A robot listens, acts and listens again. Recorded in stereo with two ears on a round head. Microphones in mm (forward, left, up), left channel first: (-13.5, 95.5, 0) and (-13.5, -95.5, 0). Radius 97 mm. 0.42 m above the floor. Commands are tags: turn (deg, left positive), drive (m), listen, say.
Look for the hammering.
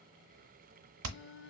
<turn deg="-70"/>
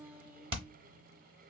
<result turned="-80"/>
<turn deg="-25"/>
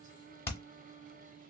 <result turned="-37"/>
<turn deg="10"/>
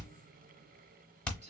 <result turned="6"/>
<say>Found it: hammering, straight ahead, under 1 m away.</say>